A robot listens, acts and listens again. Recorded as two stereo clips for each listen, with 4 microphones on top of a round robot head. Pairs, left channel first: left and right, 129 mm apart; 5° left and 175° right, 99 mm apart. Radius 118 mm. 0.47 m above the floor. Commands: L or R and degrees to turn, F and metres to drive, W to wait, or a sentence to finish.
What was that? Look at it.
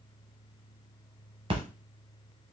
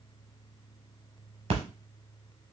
R145
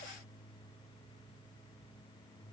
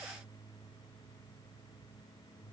Facing where the splash came from. I can't hear it now.